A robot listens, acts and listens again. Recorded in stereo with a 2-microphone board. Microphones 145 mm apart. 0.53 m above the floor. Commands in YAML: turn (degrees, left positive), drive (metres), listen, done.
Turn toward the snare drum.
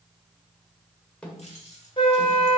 turn: 30
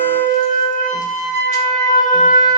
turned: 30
listen: true
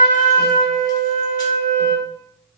listen: true
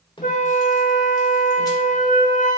turn: 145
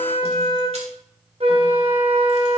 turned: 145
listen: true
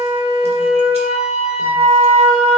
listen: true
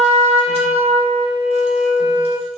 done: "Facing where the snare drum came from. I can't hear it now."